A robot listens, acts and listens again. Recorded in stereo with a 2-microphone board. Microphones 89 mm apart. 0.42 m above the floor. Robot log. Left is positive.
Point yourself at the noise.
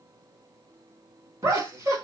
note: The laughter: about 35° right or 145° right.
cmd yaw -35
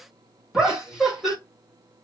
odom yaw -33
end: Facing the laughter, 1 to 2 m away.